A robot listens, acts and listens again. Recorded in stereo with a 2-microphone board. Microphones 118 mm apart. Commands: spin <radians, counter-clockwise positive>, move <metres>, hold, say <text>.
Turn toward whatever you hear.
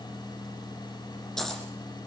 spin 0.52
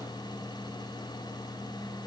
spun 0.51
hold
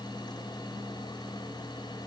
say I heard a dropped coin, but can't make it out now. It was about 25° right or 145° left.